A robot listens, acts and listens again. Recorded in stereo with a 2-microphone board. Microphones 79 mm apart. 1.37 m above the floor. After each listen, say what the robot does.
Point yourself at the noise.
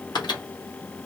Turn 70° left.
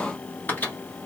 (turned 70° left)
Turn 25° left.
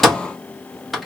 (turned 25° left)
Facing the microwave, 1 to 2 m away.